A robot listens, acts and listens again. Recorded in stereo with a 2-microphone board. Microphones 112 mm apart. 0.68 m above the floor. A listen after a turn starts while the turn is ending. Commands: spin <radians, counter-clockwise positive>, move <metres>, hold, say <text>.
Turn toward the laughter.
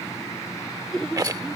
spin 0.52
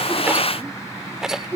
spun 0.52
spin -0.35
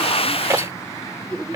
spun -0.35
say Found it: laughter, straight ahead.